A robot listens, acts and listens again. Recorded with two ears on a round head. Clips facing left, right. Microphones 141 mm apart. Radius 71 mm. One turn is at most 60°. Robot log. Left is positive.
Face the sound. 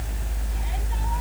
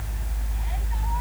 cmd idle
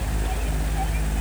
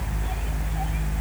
cmd idle
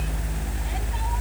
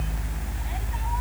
end: I can't make out anything.